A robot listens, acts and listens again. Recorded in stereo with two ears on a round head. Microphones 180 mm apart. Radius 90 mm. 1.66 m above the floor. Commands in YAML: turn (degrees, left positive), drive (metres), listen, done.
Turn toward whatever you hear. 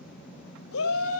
turn: 90
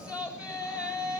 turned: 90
done: "Facing the shout, over 4 m away."